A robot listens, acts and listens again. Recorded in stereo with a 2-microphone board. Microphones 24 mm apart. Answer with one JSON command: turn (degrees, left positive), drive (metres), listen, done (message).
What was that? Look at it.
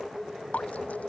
{"turn": 90}
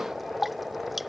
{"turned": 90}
{"done": "Found it: dripping, straight ahead."}